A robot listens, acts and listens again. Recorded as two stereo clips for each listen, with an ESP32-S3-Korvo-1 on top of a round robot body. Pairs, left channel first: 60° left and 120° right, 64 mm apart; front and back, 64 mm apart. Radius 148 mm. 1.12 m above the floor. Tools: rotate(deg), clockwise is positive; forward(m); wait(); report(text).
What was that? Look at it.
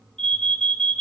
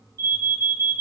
rotate(-140)
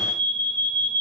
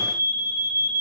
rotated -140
report("Found it: an alarm, straight ahead, under 1 m away.")